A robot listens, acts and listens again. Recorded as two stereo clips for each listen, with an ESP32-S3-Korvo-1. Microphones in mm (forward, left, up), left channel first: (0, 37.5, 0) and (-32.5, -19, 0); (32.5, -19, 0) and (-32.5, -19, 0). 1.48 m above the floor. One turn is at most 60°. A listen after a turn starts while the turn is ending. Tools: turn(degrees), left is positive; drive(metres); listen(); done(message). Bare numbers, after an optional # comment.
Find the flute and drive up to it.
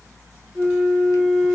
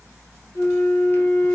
drive(1.0)
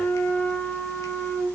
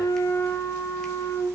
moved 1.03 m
drive(1.0)
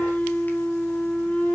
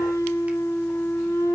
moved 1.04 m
drive(1.0)
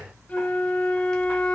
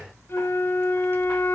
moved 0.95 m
drive(1.0)
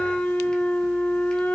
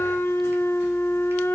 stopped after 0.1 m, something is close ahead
done("I am next to the flute.")